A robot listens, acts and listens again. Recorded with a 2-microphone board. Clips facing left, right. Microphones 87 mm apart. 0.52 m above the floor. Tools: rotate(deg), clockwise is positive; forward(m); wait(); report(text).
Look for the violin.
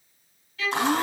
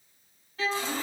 rotate(35)
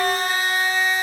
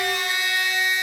wait()
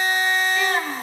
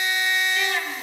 wait()
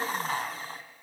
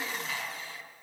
report("I heard a violin, but can't make it out now. It was about straight ahead or 110° right.")